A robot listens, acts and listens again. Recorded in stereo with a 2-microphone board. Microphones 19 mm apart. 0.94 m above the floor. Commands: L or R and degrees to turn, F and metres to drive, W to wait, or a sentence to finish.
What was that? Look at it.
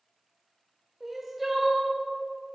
R30
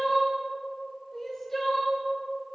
L15
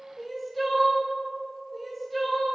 Facing the crying, 1 to 2 m away.